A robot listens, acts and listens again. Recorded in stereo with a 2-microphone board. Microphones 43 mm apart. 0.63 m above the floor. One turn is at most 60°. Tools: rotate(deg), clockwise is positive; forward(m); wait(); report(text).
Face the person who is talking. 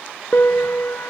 wait()
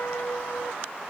wait()
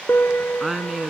rotate(30)
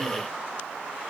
wait()
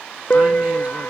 wait()
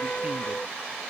report("I heard a woman speaking, but can't make it out now. It was about 25° left or 145° right.")